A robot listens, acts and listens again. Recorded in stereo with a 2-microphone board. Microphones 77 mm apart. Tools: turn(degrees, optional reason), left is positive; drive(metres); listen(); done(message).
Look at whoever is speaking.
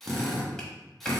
listen()
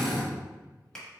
listen()
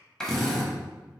done("I can't make out anyone speaking to turn to.")